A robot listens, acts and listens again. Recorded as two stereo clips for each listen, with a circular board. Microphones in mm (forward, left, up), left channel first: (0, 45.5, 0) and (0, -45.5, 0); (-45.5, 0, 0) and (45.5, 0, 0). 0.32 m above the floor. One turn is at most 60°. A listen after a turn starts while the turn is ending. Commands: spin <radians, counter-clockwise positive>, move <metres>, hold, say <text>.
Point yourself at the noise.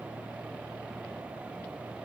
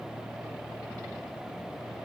hold
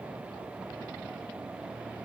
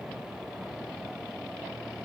hold
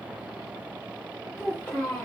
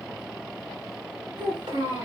spin 0.26
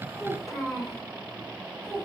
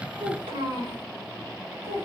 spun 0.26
say Found it: a child speaking, straight ahead, 2 to 4 m away.